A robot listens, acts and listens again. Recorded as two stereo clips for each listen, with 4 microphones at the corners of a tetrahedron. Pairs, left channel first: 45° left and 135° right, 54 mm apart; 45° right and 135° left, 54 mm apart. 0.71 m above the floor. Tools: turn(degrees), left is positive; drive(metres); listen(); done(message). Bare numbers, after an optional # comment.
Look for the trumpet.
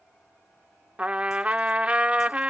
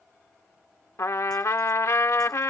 # The trumpet: 70° right.
turn(-70)
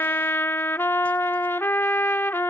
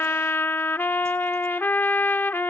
done("Found it: a trumpet, straight ahead.")